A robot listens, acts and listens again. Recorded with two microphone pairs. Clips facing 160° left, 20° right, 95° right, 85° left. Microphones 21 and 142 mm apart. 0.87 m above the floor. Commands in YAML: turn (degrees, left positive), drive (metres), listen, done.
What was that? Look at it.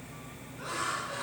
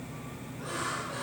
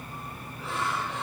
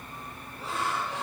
turn: 140
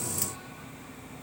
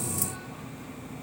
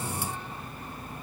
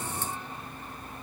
listen: true
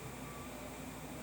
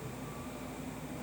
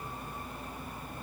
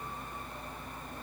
listen: true
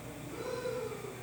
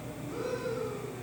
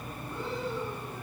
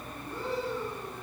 turn: 35
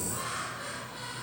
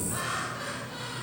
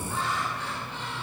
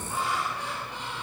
turn: 10
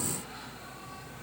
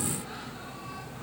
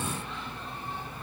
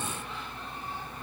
listen: true
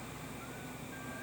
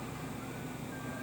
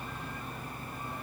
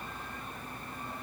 listen: true
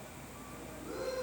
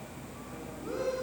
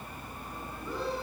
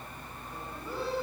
done: "Found it: laughter, straight ahead."